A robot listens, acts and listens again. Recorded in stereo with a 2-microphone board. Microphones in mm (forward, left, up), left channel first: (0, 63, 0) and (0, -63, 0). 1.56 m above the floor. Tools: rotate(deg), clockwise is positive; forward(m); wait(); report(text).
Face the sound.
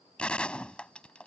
rotate(-30)
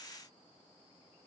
wait()
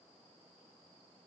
report("I heard a gunshot, but can't make it out now. It was about 20° right or 140° left.")